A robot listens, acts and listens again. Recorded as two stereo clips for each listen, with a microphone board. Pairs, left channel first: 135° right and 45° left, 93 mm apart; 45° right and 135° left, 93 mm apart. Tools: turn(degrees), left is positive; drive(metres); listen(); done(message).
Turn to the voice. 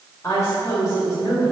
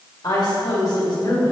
turn(degrees=-85)
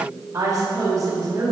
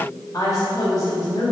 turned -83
done("Facing the woman speaking.")